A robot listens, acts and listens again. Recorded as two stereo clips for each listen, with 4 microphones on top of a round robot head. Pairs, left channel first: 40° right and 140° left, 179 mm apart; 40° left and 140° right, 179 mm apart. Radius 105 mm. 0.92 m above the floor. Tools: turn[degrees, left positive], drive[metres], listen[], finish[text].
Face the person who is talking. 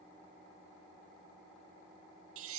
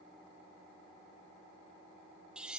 Action: listen[]
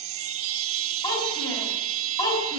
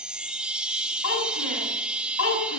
Thought: The child speaking: 35° left.
Action: turn[35]
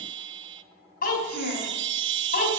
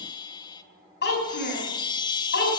Action: finish[Found it: a child speaking, straight ahead.]